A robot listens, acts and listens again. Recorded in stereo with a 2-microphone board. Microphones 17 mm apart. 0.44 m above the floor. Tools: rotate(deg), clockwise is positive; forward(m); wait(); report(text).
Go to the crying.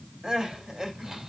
rotate(40)
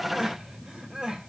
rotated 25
rotate(105)
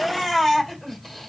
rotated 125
rotate(-20)
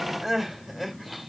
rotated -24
forward(1.0)
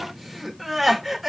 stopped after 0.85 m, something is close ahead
report("Arrived at the crying, straight ahead.")